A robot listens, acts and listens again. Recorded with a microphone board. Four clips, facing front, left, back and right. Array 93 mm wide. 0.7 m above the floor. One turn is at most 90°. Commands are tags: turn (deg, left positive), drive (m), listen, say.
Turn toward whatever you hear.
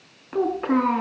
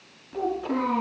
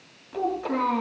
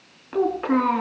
<turn deg="-45"/>
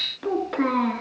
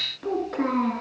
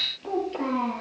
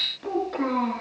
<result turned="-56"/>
<turn deg="10"/>
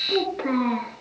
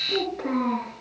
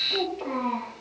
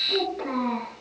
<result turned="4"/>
<say>Facing the child speaking, over 4 m away.</say>